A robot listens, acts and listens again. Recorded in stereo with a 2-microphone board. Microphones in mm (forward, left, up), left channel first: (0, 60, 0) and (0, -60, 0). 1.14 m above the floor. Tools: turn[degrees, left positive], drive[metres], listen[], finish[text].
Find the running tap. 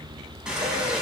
Action: turn[-30]
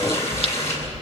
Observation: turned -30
Thought: So it is at 25° left.
Action: turn[25]
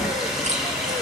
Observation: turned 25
Action: finish[Found it: a running tap, straight ahead.]